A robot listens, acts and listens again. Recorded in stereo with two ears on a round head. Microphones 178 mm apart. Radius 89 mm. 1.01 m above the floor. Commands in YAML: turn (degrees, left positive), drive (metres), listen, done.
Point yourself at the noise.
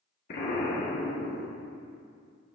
turn: 50
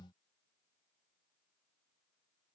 listen: true
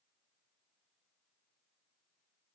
done: "I heard an explosion, but can't make it out now. It was about straight ahead or 80° left."